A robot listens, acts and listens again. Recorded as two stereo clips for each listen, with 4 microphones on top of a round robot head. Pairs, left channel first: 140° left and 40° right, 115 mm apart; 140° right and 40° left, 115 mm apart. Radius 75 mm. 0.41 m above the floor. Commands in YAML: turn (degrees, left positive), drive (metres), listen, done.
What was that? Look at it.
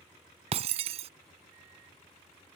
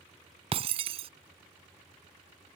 done: "Found it: breaking glass, straight ahead."